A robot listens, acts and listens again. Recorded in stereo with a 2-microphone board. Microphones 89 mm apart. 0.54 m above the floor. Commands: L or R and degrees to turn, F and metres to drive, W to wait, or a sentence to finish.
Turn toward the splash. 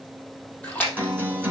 L20
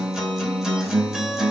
W
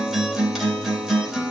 I heard a splash, but can't make it out now. It was about straight ahead or 140° left.